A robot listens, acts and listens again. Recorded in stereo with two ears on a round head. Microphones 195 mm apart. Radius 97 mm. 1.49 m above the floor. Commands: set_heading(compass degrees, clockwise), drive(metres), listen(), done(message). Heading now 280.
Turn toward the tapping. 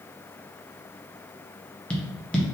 set_heading(250)
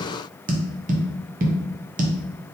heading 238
set_heading(278)
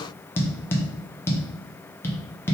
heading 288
set_heading(278)
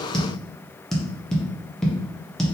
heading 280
done("Found it: tapping, straight ahead.")